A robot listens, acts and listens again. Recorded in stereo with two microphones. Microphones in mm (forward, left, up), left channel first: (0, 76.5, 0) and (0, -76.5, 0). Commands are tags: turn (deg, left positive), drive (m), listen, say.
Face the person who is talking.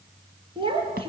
<turn deg="-35"/>
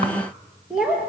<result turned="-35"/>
<say>Found it: a child speaking, straight ahead.</say>